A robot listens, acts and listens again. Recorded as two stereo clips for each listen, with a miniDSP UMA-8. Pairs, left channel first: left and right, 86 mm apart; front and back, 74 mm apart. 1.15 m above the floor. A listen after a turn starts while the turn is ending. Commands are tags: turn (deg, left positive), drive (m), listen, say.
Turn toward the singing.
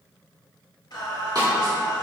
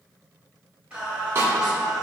<turn deg="100"/>
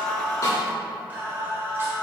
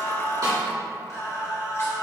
<turn deg="-40"/>
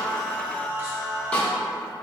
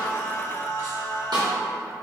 <turn deg="-40"/>
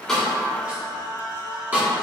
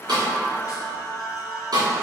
<turn deg="-15"/>
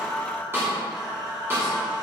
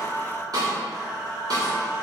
<say>Found it: singing, straight ahead, 1 to 2 m away.</say>